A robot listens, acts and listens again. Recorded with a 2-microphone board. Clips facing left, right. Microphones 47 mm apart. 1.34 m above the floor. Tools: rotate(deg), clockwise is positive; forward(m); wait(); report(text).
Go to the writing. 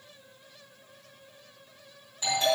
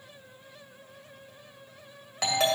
wait()
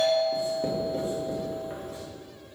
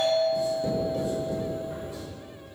rotate(-35)
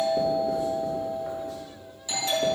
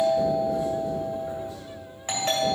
wait()
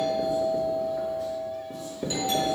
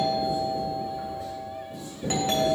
rotate(-110)
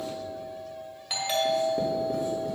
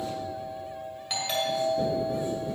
wait()
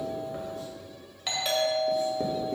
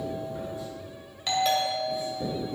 rotate(-55)
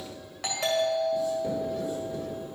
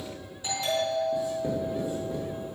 rotate(20)
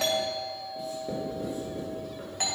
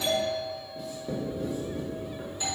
forward(1.0)
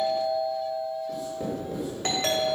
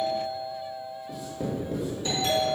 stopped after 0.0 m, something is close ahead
report("Blocked. The writing is further on, straight ahead.")